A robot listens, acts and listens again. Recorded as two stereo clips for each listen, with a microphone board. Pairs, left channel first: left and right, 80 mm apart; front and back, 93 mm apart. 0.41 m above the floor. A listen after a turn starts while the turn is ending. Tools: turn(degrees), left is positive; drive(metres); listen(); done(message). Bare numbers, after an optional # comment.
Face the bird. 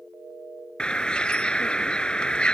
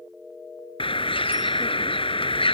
# The bird: 10° left.
turn(10)
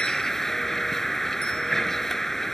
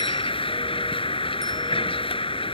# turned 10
done("Facing the bird.")